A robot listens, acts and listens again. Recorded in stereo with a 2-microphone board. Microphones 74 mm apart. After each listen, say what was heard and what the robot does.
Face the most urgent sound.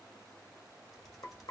Keep listening.
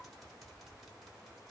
Keep listening.
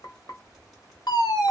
The fire alarm: about 55° left or 125° left. Turn 55° left.
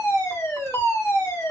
So it is at 45° left. Turn 45° left.
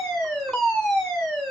The fire alarm is now 10° left. Turn 10° left.
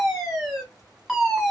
Facing the fire alarm.